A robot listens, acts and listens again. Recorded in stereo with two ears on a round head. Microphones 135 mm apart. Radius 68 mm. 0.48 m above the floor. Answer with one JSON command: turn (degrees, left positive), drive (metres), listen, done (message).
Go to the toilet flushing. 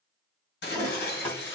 {"turn": 15}
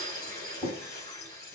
{"turn": 150}
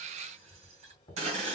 {"turn": 35}
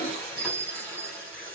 {"turn": 10}
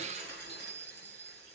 {"listen": true}
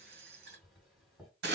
{"drive": 1.0}
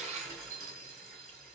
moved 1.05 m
{"listen": true}
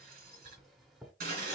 {"drive": 1.0}
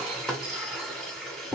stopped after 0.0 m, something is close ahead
{"done": "I am next to the toilet flushing."}